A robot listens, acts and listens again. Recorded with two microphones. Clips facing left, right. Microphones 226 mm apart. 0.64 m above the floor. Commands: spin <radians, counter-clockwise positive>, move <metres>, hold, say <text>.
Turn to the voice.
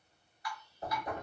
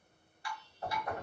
hold
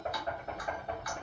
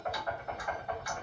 hold
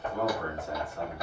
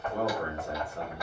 spin -0.96
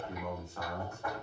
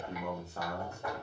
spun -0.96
spin -0.79
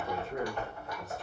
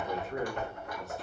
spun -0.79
hold
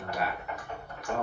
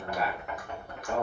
say Found it: a man speaking, straight ahead.